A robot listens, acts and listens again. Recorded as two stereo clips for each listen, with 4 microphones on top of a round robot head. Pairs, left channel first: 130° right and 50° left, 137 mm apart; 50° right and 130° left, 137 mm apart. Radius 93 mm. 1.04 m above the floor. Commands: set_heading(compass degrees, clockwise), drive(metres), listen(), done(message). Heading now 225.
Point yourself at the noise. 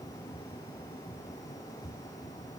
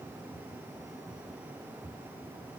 listen()
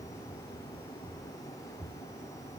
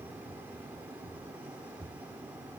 listen()
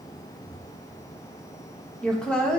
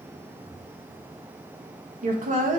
set_heading(80)
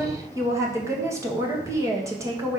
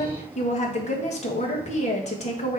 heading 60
set_heading(80)
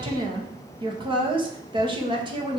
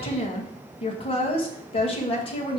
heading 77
done("Found it: a woman speaking, straight ahead.")